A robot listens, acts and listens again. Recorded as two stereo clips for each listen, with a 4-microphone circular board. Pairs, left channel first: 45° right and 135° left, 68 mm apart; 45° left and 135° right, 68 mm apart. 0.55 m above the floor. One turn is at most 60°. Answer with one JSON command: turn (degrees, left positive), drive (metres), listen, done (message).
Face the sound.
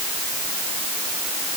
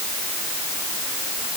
{"listen": true}
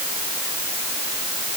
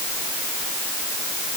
{"listen": true}
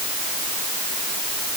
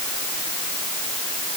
{"done": "I can't make out anything."}